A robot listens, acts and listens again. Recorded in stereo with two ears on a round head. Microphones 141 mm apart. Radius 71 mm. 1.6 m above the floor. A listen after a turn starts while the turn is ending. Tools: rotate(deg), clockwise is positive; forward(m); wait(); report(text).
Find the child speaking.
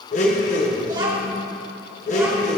rotate(25)
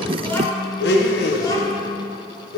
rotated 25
rotate(-25)
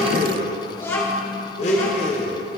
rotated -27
rotate(-20)
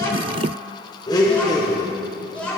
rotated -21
rotate(-10)
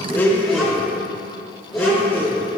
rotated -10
wait()
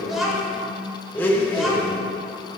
report("Found it: a child speaking, straight ahead, 2 to 4 m away.")